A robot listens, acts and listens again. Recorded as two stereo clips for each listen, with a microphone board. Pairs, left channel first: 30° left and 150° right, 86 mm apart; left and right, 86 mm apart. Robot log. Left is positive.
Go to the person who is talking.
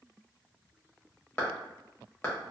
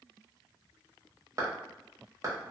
cmd idle
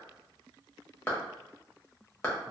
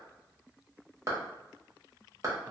cmd idle
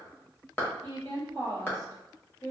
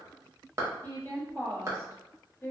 note: The woman speaking: 35° left.
cmd yaw +35
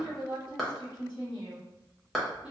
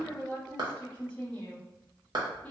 note: The woman speaking is now 15° left.
cmd yaw +15
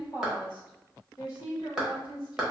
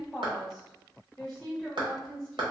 cmd fwd 1.0
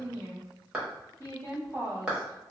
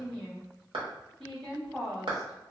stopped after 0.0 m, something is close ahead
end: Something is in my way. I am facing the woman speaking but have not reached it.